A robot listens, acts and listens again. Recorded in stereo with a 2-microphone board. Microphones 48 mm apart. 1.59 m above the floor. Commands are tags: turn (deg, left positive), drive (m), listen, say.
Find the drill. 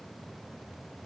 <listen/>
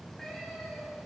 <listen/>
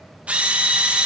<turn deg="-25"/>
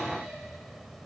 <listen/>
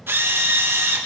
<turn deg="-125"/>
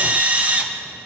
<turn deg="-35"/>
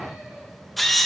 <say>Facing the drill, 1 to 2 m away.</say>